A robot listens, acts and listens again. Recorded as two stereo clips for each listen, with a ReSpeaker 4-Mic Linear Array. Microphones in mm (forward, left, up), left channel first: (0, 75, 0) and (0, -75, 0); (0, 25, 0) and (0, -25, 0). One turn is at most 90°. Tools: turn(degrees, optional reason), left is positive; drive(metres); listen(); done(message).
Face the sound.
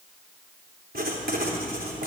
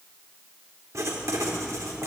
turn(degrees=-90)
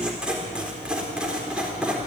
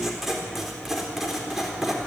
done("Facing the writing, 2 to 4 m away.")